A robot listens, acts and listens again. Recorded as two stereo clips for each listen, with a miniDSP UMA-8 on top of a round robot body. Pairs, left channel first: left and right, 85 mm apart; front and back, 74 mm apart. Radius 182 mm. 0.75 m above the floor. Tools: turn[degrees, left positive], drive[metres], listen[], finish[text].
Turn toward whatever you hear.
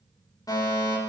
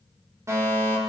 Thought: The fire alarm: 135° left.
Action: turn[135]
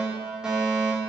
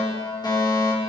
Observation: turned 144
Thought: The fire alarm is now 10° right.
Action: turn[-10]
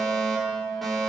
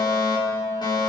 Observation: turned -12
Action: finish[Facing the fire alarm, over 4 m away.]